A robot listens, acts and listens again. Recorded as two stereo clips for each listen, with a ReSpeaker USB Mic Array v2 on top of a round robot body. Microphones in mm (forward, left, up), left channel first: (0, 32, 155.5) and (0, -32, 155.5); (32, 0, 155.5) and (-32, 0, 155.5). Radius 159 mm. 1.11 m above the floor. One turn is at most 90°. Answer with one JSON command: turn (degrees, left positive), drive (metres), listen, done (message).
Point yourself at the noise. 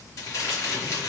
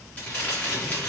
{"turn": 65}
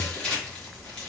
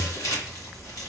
{"turn": 15}
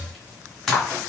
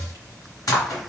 {"done": "Facing the crumpling, 1 to 2 m away."}